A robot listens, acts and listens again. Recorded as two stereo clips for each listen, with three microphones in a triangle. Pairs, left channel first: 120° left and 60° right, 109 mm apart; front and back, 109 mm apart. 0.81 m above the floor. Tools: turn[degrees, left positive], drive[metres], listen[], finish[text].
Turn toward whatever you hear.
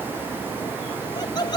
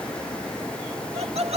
Thought: The laughter: 165° left.
Action: turn[165]
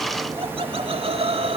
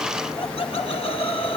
Thought: The laughter is now 30° right.
Action: turn[-30]
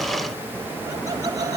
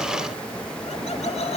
Action: finish[Found it: laughter, straight ahead.]